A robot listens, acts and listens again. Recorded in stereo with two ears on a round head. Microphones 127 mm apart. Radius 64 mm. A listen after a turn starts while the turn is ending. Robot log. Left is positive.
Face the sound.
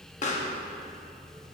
note: The pop: about 55° left or 125° left.
cmd yaw +55
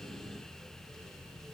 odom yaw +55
cmd idle
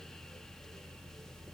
end: I heard a pop, but can't make it out now. It was about straight ahead or 70° left.